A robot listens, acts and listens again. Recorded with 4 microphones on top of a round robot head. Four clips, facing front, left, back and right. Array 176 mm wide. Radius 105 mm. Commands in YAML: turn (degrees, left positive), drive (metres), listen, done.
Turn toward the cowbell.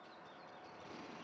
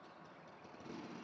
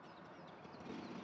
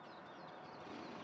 listen: true
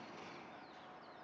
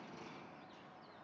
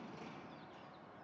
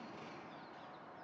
listen: true
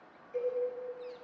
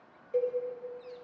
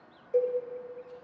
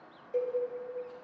turn: 160
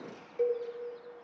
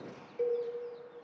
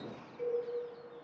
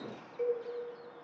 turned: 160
done: "Facing the cowbell, 2 to 4 m away."